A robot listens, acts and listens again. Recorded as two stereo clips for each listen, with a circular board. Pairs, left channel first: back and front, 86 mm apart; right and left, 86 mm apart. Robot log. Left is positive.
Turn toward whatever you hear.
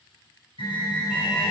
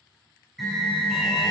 note: The alarm: straight behind.
cmd yaw +180
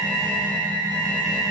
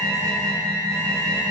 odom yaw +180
note: The alarm is now 35° left.
cmd yaw +35
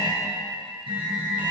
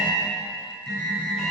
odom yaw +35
end: Facing the alarm, 2 to 4 m away.